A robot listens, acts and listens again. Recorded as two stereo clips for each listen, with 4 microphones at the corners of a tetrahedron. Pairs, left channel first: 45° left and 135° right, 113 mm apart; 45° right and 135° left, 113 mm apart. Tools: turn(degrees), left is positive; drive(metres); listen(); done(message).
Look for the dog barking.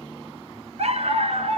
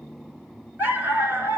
turn(degrees=-155)
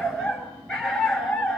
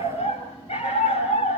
turn(degrees=-40)
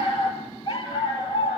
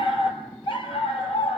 done("Facing the dog barking.")